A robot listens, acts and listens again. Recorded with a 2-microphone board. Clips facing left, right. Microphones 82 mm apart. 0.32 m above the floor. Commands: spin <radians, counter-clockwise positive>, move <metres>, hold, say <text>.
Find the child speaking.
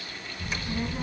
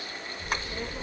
spin 0.44
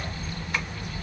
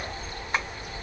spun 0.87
spin 1.75
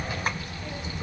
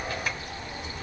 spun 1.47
spin 0.26
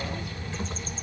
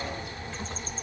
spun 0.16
say Facing the child speaking.